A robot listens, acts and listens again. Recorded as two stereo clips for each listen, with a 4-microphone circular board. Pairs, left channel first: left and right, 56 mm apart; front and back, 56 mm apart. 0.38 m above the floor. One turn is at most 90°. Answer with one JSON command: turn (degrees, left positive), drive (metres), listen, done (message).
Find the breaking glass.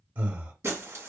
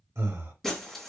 {"turn": -80}
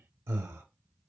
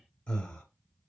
{"done": "I heard breaking glass from this way, but can't make it out now."}